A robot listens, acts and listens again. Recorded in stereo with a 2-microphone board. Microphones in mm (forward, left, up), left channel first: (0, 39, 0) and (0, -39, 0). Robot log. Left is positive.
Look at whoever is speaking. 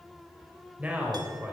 note: The man speaking: about 20° right or 160° right.
cmd yaw -20
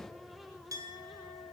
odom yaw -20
cmd idle
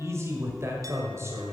note: So it is at 140° right.
cmd yaw -140
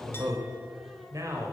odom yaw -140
note: The man speaking is now 50° right.
cmd yaw -50
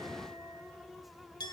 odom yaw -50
cmd idle
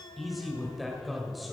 end: Found it: a man speaking, straight ahead, 1 to 2 m away.